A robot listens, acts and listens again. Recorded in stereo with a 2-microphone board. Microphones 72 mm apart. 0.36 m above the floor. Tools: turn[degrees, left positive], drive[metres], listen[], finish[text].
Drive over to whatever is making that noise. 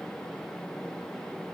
Action: listen[]
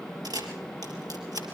Thought: The camera shutter: about 65° right or 115° right.
Action: turn[-65]
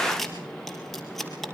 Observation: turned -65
Action: drive[1.0]
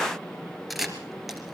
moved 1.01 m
Action: drive[1.0]
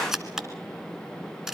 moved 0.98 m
Thought: The camera shutter is now 10° right.
Action: turn[-10]
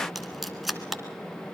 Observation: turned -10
Action: drive[1.0]
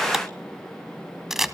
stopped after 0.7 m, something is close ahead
Action: finish[Arrived at the camera shutter, straight ahead.]